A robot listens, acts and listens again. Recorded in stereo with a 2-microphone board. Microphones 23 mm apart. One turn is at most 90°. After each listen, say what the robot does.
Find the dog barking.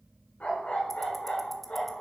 Turn 90° left.
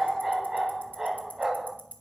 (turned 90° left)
Turn 25° right.
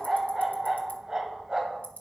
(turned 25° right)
Turn 35° right.
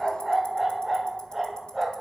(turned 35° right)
Found it: a dog barking, straight ahead, 1 to 2 m away.